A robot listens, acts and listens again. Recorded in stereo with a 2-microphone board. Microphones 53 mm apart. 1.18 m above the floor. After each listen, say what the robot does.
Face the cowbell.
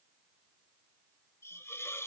Keep listening.
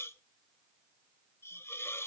Keep listening.
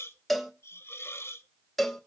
Turn 30° left.
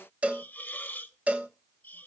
Turn 25° right.
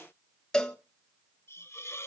Turn 15° left.
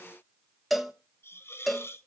Found it: a cowbell, straight ahead, 1 to 2 m away.